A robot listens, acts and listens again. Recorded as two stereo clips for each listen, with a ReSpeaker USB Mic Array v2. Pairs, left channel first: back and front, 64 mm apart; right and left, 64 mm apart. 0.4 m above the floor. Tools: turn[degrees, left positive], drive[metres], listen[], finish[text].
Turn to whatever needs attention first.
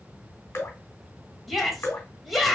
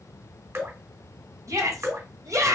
Thought: The shout: 90° left.
Action: turn[90]
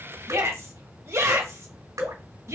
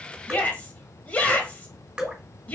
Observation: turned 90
Thought: The shout is now 25° right.
Action: turn[-25]
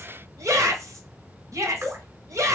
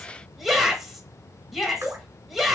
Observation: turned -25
Action: finish[Facing the shout, 1 to 2 m away.]